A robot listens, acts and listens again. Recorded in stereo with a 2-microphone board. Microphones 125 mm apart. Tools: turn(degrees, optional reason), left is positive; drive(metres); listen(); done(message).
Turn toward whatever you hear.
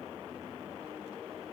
listen()
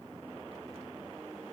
listen()
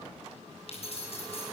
turn(degrees=55, reason="The keys jangling: about 55° left or 125° left.")
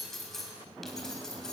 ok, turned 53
done("Facing the keys jangling.")